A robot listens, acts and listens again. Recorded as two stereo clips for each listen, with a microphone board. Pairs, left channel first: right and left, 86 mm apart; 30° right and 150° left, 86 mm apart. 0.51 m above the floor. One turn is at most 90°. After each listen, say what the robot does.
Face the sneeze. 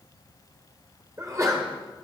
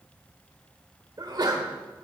Turn 90° left.
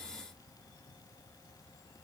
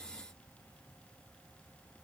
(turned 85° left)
Turn 50° left.
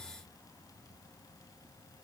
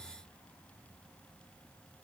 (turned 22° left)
Turn 25° left.
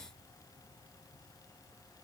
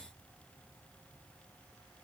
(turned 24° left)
I heard a sneeze from this way, but can't make it out now.